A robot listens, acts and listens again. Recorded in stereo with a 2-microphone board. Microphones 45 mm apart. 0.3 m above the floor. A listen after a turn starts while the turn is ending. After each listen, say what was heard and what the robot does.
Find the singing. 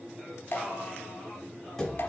The singing: about 20° right or 160° right. Turn 20° right.
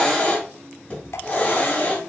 Keep listening.
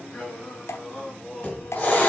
So it is at 20° left. Turn 20° left.
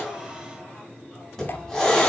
Keep listening.
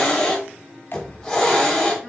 Keep listening.
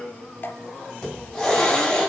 The singing is now 10° left. Turn 10° left.
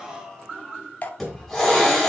Facing the singing, 2 to 4 m away.